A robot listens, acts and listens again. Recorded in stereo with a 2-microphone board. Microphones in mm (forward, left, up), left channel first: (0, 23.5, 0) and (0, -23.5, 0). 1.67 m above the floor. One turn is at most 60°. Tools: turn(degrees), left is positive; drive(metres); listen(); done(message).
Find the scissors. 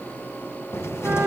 listen()
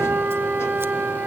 listen()
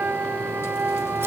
done("I can't make out scissors, only a flute and a cupboard door.")